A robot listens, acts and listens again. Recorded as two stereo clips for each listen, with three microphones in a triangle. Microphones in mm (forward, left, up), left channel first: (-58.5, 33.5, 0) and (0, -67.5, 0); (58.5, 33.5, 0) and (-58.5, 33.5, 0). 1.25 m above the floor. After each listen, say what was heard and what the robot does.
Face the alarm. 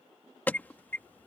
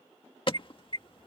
The alarm: 45° left. Turn 45° left.
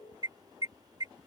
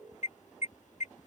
Facing the alarm.